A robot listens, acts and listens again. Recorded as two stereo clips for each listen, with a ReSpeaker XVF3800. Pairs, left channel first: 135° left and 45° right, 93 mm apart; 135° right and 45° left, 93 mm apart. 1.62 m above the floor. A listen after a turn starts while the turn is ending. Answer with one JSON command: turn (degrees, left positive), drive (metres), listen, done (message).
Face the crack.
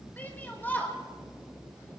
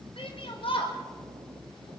{"listen": true}
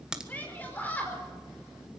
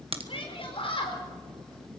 {"turn": 35}
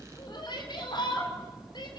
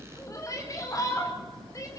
{"done": "Facing where the crack came from. I can't hear it now."}